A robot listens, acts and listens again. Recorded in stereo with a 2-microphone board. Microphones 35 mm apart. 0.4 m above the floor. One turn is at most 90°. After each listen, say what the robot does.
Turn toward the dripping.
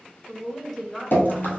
Turn 70° left.
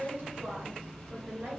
Keep listening.
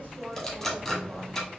Facing the dripping, 1 to 2 m away.